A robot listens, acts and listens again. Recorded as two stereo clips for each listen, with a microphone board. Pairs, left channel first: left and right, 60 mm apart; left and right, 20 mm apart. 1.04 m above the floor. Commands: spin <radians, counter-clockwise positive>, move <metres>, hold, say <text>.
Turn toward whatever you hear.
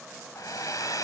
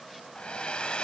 spin 1.57
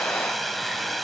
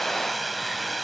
say Found it: a hair dryer, straight ahead, 2 to 4 m away.